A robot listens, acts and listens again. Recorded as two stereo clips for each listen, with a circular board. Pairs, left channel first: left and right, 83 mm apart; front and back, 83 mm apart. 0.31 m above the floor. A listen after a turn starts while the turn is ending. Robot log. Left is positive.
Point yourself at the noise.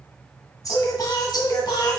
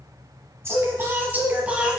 note: The singing: 105° left.
cmd yaw +105
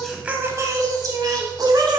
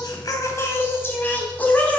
note: The singing is now 75° right.
cmd yaw -75
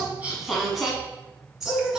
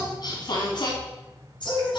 note: The singing is now 10° right.
cmd yaw -10
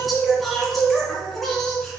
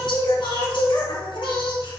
end: Facing the singing.